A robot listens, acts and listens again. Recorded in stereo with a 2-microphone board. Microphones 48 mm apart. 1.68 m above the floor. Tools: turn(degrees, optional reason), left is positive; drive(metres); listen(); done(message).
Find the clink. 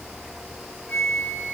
listen()
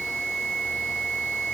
listen()
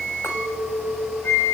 turn(degrees=65, reason="The clink: about 65° left or 115° left.")
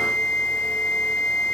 listen()
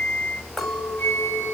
done("Facing the clink.")